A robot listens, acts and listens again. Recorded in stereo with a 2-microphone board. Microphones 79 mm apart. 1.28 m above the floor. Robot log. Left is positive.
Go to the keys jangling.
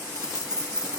cmd yaw -30
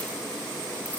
cmd idle
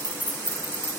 note: So it is at 25° left.
cmd yaw +25
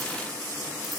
cmd idle
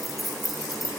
cmd fwd 1.0
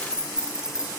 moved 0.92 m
note: The keys jangling is now 10° right.
cmd yaw -10
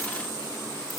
cmd idle
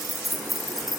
cmd fwd 1.0
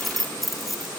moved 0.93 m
cmd fwd 1.0
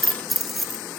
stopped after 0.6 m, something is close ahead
end: Arrived at the keys jangling, straight ahead.